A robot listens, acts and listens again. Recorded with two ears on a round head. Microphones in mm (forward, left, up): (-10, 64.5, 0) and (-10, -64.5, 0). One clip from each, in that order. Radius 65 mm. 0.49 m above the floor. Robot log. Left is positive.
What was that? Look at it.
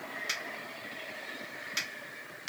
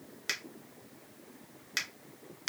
note: The finger snap: about 35° right or 145° right.
cmd yaw -35
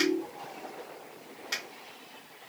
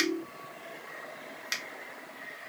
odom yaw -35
note: So it is at 105° right.
cmd yaw -105
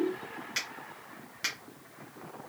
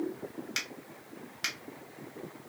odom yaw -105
note: The finger snap is now 20° right.
cmd yaw -20
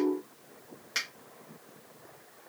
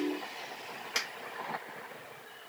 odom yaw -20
note: The finger snap is now 10° right.
cmd yaw -10
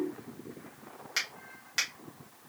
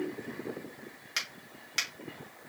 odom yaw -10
end: Facing the finger snap, 1 to 2 m away.